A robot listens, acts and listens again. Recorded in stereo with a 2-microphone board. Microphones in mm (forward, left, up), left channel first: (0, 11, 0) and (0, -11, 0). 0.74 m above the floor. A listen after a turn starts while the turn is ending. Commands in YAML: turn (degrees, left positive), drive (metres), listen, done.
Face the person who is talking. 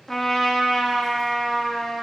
listen: true
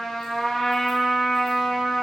listen: true
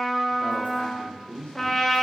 turn: 55
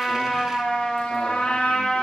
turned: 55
listen: true
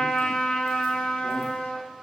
listen: true
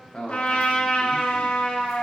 turn: 55
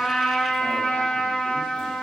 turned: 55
listen: true
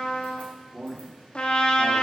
done: "Facing the man speaking."